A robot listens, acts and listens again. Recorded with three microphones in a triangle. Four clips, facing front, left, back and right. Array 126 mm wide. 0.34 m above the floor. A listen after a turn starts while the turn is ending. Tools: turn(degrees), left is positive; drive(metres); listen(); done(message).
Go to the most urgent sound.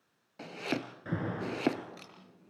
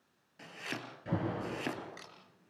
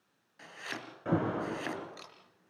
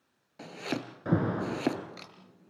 turn(degrees=-130)
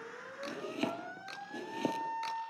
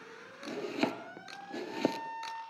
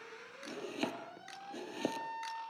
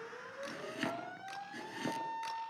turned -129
drive(metres=1.0)
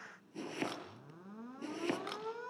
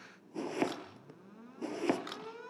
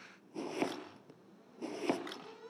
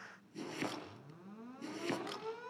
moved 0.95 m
drive(metres=1.0)
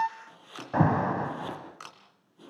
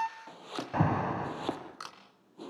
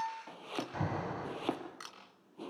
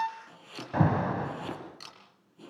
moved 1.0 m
drive(metres=1.0)
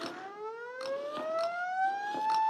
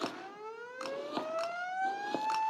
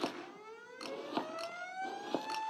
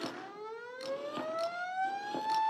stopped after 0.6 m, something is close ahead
done("Arrived at the alarm, straight ahead.")